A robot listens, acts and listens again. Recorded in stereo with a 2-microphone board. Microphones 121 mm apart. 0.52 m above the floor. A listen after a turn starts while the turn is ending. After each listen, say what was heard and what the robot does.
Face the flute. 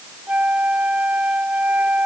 Turn 30° right.
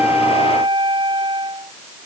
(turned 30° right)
So it is at 135° right. Turn 135° right.
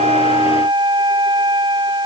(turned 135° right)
The flute is now 40° right. Turn 40° right.
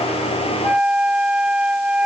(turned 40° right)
The flute is now 10° right. Turn 10° right.
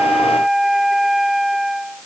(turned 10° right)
Facing the flute.